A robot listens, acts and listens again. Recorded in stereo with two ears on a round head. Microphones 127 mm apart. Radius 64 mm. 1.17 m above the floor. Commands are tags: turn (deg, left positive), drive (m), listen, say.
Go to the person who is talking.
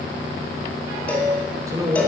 <turn deg="-25"/>
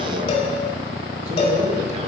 <listen/>
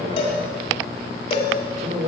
<turn deg="-125"/>
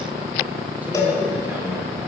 <listen/>
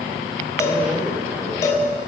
<turn deg="-10"/>
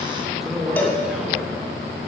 <drive m="1.0"/>
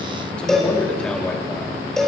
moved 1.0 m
<drive m="1.0"/>
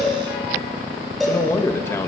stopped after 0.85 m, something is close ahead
<turn deg="15"/>
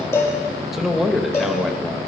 <say>Arrived at the man speaking, straight ahead.</say>